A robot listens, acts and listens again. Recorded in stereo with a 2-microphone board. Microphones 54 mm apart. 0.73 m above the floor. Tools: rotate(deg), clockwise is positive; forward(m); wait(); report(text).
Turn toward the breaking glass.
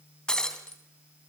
rotate(-30)
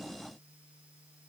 wait()
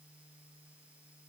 report("I heard breaking glass, but can't make it out now. It was about 15° right or 135° left.")